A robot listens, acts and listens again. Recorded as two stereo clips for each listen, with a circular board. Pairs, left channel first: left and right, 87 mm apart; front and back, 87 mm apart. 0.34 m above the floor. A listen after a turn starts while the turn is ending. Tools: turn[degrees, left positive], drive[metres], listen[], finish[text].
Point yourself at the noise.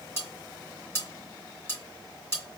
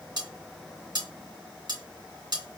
Thought: The cutlery clinking: 150° left.
Action: turn[150]
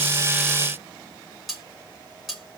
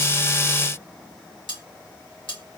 Action: finish[Facing the cutlery clinking, 2 to 4 m away.]